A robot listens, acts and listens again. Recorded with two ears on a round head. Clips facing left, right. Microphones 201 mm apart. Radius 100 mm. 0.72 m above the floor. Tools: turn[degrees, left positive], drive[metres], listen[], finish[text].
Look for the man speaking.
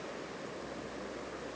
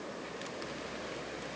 Action: listen[]
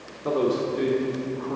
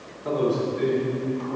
Thought: The man speaking: about 65° left or 115° left.
Action: turn[65]
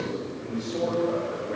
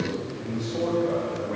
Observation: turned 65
Thought: So it is at 20° left.
Action: turn[20]
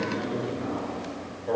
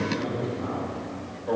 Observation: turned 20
Thought: The man speaking is now 10° left.
Action: turn[10]
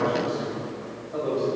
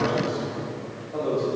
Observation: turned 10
Action: finish[Found it: a man speaking, straight ahead.]